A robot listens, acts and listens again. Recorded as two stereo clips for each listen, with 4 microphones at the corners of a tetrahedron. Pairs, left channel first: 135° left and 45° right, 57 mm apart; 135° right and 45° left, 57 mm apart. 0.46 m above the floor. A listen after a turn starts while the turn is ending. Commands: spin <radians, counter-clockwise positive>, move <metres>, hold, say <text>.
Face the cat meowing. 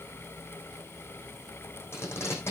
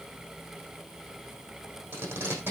hold
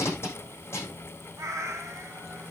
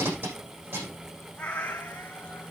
spin -1.22
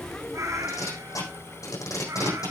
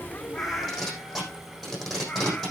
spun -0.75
spin -0.96
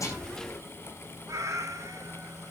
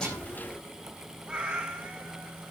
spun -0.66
spin -0.35
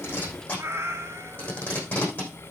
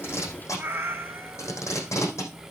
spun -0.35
say Facing the cat meowing, 2 to 4 m away.